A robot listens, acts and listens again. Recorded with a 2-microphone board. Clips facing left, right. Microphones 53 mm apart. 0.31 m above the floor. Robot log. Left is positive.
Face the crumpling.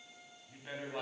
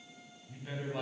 cmd idle
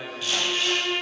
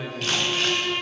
note: The crumpling: about 70° right or 110° right.
cmd yaw -70
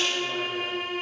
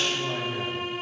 cmd idle
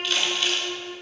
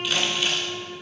note: So it is at 15° right.
cmd yaw -15
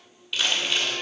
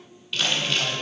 end: Found it: crumpling, straight ahead, 2 to 4 m away.